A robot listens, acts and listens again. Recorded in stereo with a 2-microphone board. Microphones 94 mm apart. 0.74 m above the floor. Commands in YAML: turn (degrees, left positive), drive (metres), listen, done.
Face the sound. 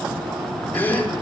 turn: 20
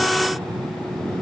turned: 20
listen: true
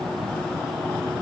done: "I heard a gasp, but can't make it out now. It was about straight ahead or 140° left."